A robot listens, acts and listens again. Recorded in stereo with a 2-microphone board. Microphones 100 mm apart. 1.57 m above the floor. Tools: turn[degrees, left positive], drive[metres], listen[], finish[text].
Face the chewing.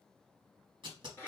Action: listen[]
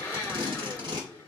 Action: listen[]
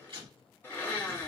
Action: finish[I can't make out chewing, only a blender and tape being pulled.]